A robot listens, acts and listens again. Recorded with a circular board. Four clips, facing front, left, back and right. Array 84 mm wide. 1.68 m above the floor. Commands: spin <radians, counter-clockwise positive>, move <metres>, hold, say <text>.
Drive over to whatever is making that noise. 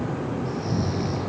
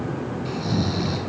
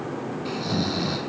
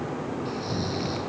spin 2.71
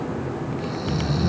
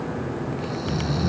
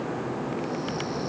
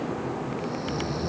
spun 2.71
spin 0.70
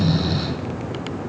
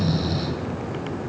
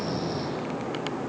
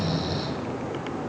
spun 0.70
move 1.0
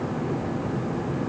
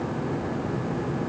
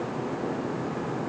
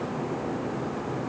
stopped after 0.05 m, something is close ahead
hold
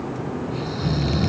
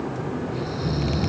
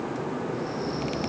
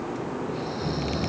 say Something is in my way. I am facing the snoring but have not reached it.